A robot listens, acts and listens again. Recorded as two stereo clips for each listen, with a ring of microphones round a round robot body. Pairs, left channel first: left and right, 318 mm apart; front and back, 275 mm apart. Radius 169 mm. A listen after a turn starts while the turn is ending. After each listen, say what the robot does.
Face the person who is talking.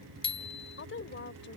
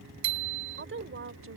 Turn 140° left.
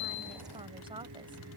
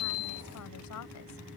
Turn 15° right.
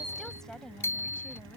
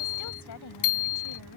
Found it: a woman speaking, straight ahead.